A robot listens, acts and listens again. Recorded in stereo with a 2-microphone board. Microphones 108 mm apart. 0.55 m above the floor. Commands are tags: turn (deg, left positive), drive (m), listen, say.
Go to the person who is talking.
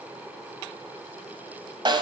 <listen/>
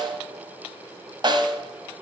<listen/>
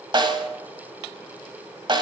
<say>I can't make out anyone speaking, only a snare drum.</say>